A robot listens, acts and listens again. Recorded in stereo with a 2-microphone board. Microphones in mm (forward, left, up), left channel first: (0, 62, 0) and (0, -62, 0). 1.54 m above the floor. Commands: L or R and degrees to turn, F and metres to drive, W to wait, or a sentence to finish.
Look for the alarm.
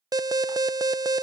R30
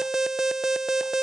Facing the alarm.